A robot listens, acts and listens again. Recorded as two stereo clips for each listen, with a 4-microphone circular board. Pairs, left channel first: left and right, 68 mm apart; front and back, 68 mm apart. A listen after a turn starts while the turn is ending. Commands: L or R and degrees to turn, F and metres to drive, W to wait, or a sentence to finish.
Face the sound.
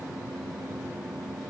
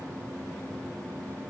W
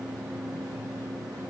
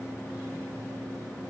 W
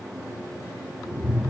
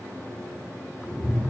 R15
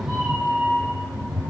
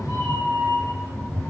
Found it: a cat meowing, straight ahead, over 4 m away.